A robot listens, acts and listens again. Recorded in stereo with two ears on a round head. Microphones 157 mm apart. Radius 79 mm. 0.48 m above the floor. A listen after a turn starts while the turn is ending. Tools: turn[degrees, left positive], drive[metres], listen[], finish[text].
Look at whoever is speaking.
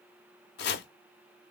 Action: listen[]
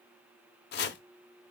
Action: listen[]
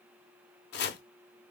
Action: finish[I can't make out anyone speaking to turn to.]